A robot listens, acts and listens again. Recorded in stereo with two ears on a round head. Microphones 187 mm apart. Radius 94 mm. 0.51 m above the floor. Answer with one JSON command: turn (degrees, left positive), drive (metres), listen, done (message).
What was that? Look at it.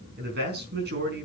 {"turn": -50}
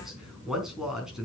{"done": "Found it: a man speaking, straight ahead, over 4 m away."}